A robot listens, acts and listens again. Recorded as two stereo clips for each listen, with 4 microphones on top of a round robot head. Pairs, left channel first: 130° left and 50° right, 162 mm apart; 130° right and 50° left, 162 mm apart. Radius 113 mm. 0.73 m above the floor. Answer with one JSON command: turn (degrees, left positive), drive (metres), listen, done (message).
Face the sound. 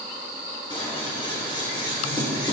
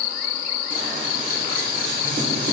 {"turn": 75}
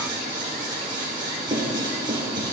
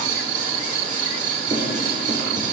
{"turn": 15}
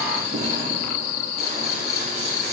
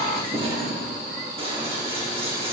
{"done": "Facing the scissors."}